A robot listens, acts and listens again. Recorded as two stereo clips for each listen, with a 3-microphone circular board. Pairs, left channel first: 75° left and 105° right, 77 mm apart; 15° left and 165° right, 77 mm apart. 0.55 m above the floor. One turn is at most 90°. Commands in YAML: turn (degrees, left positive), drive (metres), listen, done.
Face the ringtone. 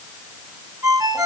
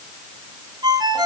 turn: -90
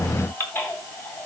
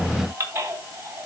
turn: -55
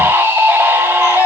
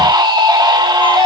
listen: true
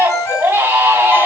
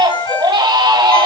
turn: 15
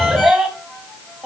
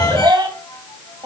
listen: true
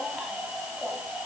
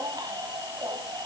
listen: true
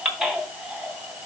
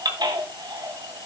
done: "Facing where the ringtone came from. I can't hear it now."